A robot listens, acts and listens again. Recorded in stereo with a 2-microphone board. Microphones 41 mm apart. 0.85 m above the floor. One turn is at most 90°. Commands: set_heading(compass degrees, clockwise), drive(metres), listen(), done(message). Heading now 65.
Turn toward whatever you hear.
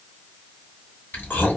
set_heading(0)
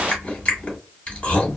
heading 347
set_heading(312)
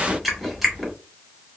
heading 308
done("Found it: chewing, straight ahead.")